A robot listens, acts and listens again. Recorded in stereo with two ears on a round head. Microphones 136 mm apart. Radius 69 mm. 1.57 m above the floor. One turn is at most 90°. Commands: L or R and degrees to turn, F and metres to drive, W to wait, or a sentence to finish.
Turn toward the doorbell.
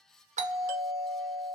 R50
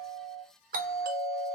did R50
R75
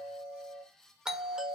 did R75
Found it: a doorbell, straight ahead.